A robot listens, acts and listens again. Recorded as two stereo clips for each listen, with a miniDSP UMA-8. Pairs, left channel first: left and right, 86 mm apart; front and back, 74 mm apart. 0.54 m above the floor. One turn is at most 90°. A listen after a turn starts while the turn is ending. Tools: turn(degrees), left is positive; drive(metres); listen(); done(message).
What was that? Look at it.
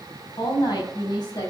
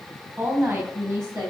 turn(degrees=90)
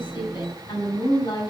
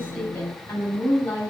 turn(degrees=65)
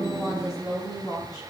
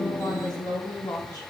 turn(degrees=40)
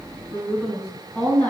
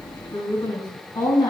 turn(degrees=10)
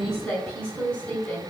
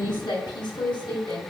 turn(degrees=10)
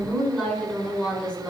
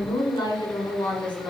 done("Found it: a woman speaking, straight ahead, over 4 m away.")